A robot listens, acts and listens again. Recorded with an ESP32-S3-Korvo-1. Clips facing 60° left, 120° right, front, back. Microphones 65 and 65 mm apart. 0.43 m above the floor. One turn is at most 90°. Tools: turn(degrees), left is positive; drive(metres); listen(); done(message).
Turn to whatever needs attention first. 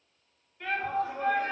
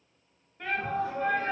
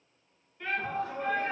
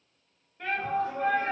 turn(degrees=-90)
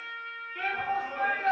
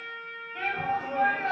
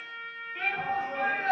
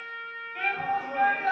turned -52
turn(degrees=-90)
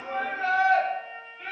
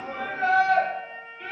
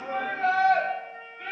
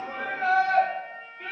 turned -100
done("Facing the shout.")